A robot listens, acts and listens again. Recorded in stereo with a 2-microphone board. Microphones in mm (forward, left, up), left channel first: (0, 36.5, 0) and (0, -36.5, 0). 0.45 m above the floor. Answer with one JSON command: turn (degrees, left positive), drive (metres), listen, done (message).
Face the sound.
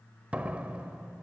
{"turn": -20}
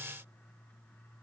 {"listen": true}
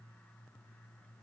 {"done": "I heard a door slam, but can't make it out now. It was about straight ahead or 140° right."}